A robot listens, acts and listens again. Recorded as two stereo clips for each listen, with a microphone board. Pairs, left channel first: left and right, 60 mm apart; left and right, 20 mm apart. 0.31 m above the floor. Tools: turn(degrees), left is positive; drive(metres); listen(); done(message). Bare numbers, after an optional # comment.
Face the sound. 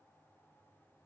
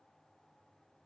listen()
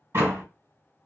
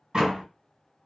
# The door slam: about 50° right or 130° right.
turn(-50)
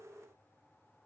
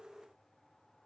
listen()
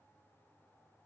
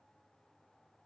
done("I heard a door slam, but can't make it out now. It was about straight ahead or 80° right.")